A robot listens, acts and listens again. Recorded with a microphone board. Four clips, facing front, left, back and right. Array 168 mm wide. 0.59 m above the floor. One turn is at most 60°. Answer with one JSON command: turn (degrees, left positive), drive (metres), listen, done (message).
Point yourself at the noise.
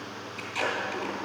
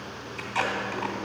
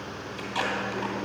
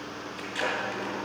{"turn": 60}
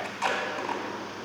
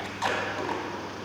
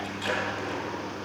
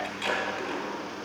{"turn": 50}
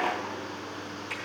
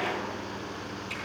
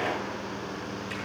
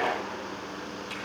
{"listen": true}
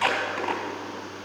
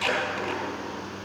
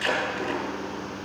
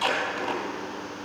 {"turn": -15}
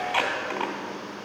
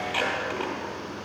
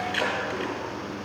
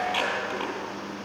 {"done": "Facing the tape being pulled."}